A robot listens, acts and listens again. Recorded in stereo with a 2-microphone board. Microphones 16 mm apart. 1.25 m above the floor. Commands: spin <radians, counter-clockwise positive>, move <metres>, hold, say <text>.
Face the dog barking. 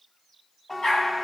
spin 1.31
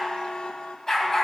spin 0.52
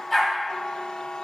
say Found it: a dog barking, straight ahead, 2 to 4 m away.